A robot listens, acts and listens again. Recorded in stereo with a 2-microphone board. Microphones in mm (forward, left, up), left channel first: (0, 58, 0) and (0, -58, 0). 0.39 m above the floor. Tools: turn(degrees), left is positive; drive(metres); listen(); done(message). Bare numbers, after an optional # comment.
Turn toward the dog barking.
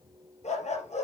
turn(90)
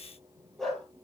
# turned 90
done("Facing the dog barking.")